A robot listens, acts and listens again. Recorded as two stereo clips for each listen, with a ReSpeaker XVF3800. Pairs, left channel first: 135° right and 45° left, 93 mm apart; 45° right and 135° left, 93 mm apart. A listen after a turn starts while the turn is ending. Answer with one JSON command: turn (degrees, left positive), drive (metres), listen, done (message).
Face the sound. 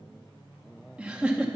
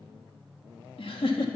{"turn": -35}
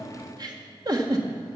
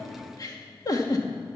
{"done": "Found it: a giggle, straight ahead, 1 to 2 m away."}